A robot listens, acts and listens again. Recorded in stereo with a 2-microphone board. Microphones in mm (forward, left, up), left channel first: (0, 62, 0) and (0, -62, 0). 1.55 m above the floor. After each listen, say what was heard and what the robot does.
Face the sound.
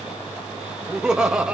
Turn 30° right.
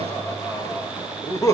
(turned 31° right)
So it is at 25° left. Turn 25° left.
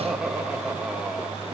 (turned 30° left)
Found it: laughter, straight ahead.